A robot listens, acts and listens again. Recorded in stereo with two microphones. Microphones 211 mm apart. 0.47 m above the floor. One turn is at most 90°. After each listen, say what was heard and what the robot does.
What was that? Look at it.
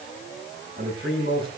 The man speaking: about 50° right or 130° right. Turn 50° right.
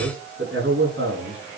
So it is at 75° right. Turn 75° right.
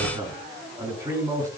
The man speaking is now 15° right. Turn 15° right.
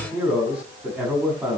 Found it: a man speaking, straight ahead, over 4 m away.